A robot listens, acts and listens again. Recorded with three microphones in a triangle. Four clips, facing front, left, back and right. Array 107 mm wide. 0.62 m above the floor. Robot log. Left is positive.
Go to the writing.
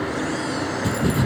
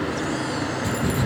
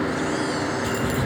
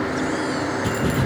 note: The writing: 20° right.
cmd yaw -20
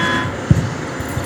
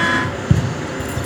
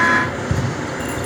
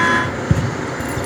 cmd fwd 1.0
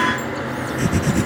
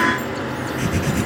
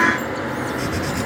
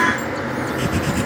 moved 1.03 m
cmd fwd 1.0
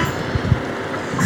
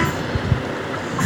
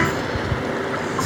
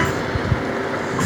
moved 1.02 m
cmd fwd 1.0
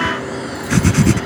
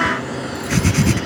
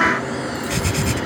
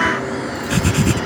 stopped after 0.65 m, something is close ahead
end: I am next to the writing.